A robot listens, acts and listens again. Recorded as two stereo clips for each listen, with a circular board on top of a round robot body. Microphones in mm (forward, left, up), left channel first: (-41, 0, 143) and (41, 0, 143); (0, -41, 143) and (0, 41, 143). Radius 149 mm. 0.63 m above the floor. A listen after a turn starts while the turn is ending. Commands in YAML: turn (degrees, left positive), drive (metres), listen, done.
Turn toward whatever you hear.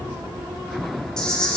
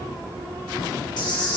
turn: -100
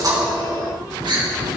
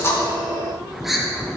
done: "Found it: a camera shutter, straight ahead."